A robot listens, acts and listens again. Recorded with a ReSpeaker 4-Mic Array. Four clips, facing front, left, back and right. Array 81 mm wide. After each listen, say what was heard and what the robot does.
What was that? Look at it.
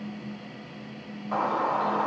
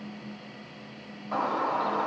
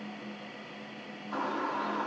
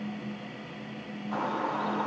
The bird: 20° left. Turn 20° left.
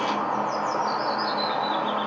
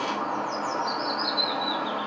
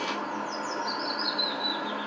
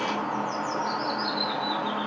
Facing the bird, 2 to 4 m away.